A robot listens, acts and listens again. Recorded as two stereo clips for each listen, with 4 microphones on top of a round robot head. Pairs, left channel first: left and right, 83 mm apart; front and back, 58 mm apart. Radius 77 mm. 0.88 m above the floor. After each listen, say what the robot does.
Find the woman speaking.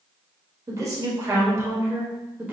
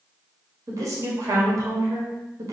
Turn 160° right.
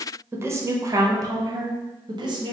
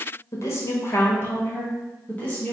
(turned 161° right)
Turn 70° right.
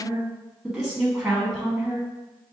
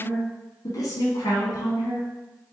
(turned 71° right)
Turn 10° right.
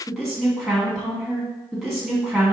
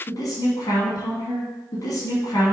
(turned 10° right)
Facing the woman speaking.